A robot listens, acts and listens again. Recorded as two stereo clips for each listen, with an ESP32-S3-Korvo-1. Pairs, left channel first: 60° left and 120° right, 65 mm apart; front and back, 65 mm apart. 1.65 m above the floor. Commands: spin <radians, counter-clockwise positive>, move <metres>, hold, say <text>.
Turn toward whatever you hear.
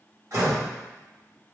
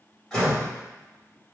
spin -1.48
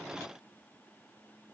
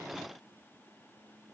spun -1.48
say I heard a door slam from this way, but can't make it out now.